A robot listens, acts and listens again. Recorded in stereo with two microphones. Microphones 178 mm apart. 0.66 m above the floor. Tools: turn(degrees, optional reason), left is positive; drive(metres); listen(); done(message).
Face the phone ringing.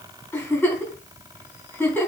listen()
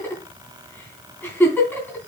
listen()
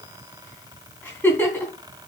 done("I can't make out a phone ringing, only a giggle.")